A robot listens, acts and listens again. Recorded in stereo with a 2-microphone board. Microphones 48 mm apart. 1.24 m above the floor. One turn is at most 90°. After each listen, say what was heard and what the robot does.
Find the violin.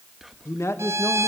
The violin: about 70° right or 110° right. Turn 70° right.
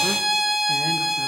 Facing the violin.